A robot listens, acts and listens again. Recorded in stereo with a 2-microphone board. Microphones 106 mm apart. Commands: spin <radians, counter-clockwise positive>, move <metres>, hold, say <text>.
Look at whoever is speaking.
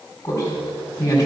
spin 0.52
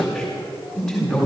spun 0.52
say Facing the man speaking.